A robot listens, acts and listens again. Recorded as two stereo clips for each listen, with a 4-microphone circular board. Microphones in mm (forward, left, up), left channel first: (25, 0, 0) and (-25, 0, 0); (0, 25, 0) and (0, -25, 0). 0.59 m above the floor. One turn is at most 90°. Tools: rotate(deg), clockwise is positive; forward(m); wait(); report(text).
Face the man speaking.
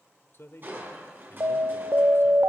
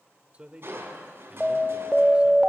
rotate(30)
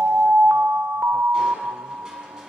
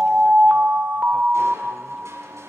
wait()
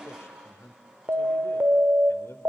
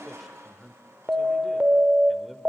report("Facing the man speaking, 1 to 2 m away.")